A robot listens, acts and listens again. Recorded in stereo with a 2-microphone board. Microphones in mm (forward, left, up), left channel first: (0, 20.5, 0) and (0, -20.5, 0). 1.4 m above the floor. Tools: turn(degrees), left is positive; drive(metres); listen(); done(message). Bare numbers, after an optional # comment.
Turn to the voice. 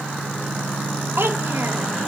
# The child speaking: about 65° right or 115° right.
turn(-65)
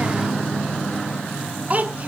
# So it is at 40° right.
turn(-40)
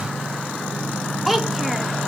done("Facing the child speaking, under 1 m away.")